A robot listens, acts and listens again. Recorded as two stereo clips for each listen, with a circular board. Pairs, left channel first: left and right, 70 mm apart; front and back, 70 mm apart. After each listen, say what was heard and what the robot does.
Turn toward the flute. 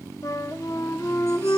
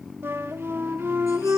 The flute: 125° left. Turn 125° left.
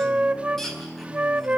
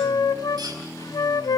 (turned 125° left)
The flute is now 20° right. Turn 20° right.
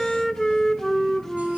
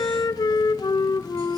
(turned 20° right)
Found it: a flute, straight ahead.